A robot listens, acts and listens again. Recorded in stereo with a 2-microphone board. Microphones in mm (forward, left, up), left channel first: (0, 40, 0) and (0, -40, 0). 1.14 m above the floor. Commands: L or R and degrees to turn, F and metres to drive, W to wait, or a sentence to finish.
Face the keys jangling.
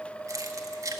R40
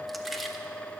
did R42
Facing the keys jangling.